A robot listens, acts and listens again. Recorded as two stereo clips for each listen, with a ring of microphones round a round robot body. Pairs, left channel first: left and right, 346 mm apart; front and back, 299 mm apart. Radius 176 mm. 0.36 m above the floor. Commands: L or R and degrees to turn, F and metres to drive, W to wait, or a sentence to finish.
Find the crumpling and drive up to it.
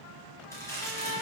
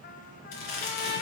L10
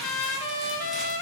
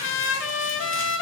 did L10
W
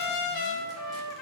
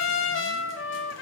W
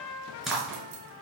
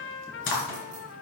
F1.0
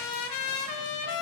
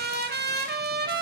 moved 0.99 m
W
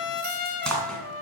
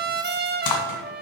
F1.0
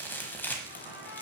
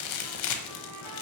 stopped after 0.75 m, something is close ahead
I am next to the crumpling.